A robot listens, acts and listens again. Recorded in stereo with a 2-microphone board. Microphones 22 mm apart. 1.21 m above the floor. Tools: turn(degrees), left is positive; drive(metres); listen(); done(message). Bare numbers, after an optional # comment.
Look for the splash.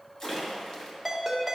# The splash: about 35° left or 145° left.
turn(35)
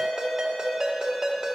listen()
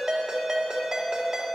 done("I heard a splash, but can't make it out now. It was about straight ahead or 110° left.")